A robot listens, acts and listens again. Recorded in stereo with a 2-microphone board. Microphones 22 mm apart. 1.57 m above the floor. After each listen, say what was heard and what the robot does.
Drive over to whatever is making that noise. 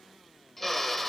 Turn 30° left.
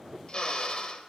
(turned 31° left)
So it is at 135° left. Turn 135° left.
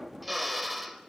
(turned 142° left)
Drive 1.0 m forward.
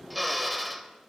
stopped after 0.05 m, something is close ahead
Something is in my way. I am facing the drill but have not reached it.